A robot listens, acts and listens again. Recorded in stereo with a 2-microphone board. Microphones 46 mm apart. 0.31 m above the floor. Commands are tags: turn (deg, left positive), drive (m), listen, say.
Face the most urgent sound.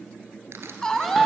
<turn deg="30"/>
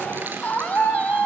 <turn deg="140"/>
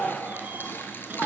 <listen/>
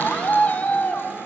<turn deg="40"/>
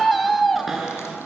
<say>Found it: a scream, straight ahead.</say>